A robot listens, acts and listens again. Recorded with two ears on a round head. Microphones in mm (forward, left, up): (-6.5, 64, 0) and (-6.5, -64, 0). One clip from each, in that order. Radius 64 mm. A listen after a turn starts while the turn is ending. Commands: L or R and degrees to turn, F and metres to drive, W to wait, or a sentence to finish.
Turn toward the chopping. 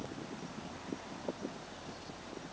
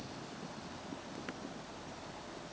W
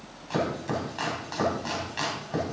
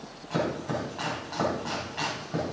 L90
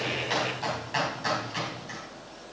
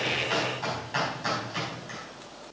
L10
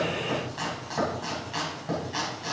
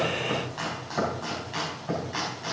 Facing the chopping, 2 to 4 m away.